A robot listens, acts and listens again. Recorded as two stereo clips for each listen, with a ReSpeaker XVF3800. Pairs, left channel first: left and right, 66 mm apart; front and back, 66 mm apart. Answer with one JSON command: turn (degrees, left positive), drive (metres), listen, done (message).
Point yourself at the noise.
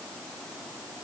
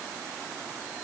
{"listen": true}
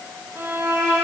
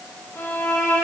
{"turn": -45}
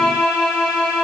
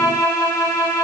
{"done": "Found it: a violin, straight ahead, 2 to 4 m away."}